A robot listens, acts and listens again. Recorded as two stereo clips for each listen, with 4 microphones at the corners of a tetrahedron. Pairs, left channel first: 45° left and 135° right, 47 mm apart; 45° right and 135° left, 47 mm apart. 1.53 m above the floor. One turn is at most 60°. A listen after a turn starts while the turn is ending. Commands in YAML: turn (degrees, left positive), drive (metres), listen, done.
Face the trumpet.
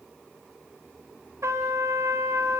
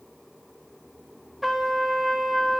turn: -60
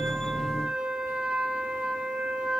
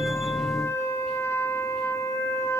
turn: -60
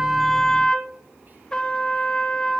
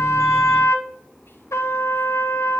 turn: -30
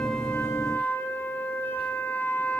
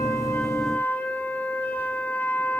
done: "Found it: a trumpet, straight ahead, 2 to 4 m away."